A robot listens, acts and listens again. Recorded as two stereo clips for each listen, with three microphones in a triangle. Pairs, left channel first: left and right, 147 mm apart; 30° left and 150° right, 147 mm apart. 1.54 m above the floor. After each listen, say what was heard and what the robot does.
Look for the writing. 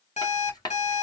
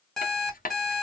The writing: 30° left. Turn 30° left.
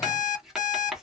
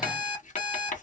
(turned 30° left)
Found it: writing, straight ahead, under 1 m away.